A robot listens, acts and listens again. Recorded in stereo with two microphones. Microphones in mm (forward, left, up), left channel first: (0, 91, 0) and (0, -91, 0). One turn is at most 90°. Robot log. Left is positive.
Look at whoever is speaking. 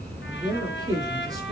note: The man speaking: about 20° right or 160° right.
cmd yaw -20
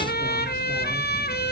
cmd idle
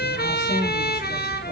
cmd idle
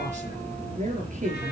note: So it is at 140° right.
cmd yaw -90
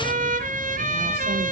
note: Nothing new. It was at 50° right.
cmd yaw -50
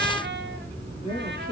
note: The man speaking is now 30° left.
cmd yaw +30
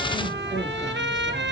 cmd idle
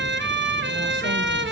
cmd idle
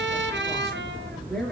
end: Found it: a man speaking, straight ahead, over 4 m away.